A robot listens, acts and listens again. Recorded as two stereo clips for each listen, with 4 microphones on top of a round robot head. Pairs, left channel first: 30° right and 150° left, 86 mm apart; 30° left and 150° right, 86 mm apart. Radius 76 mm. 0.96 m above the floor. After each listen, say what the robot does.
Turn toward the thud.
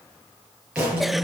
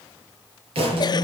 Turn 130° right.
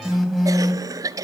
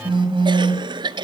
I heard a thud from this way, but can't make it out now.